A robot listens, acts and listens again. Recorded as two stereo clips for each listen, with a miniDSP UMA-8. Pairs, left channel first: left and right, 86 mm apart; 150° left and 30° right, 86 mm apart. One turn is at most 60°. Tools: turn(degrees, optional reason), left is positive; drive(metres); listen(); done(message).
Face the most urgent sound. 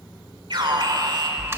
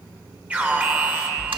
turn(degrees=-60, reason="The alarm: 100° right.")
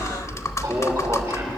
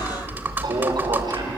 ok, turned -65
turn(degrees=-40, reason="The alarm is now 40° right.")
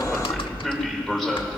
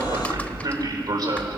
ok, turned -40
done("Facing the alarm.")